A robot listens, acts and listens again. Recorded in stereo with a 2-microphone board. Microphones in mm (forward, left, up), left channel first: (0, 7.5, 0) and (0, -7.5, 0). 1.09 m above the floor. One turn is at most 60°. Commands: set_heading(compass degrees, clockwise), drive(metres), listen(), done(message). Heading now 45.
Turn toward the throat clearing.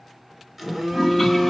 listen()
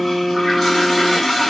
listen()
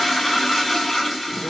done("I can't make out throat clearing, only a phone buzzing and a toilet flushing.")